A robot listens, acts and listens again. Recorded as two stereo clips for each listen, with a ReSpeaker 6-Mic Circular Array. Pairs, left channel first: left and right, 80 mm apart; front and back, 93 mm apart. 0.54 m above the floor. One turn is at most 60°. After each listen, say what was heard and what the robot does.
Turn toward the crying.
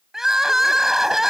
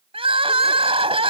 The crying: 175° right. Turn 60° right.
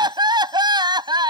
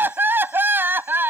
The crying is now 110° right. Turn 60° right.
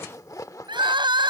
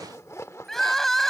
The crying is now 85° right. Turn 60° right.
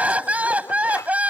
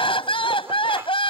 The crying is now 15° right. Turn 15° right.
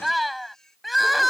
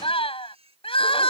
Facing the crying.